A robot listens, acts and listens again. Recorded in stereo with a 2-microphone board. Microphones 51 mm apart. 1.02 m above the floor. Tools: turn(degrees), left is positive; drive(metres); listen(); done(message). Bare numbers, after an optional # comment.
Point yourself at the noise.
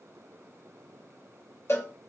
# The cowbell: about 55° left or 125° left.
turn(55)
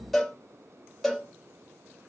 done("Facing the cowbell.")